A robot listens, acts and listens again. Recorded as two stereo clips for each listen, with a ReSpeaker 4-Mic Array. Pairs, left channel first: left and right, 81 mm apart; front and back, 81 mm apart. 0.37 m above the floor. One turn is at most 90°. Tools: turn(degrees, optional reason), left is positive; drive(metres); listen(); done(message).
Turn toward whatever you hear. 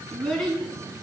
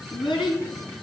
turn(degrees=10, reason="The child speaking: 10° left.")
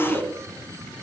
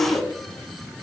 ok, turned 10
done("Found it: a child speaking, straight ahead.")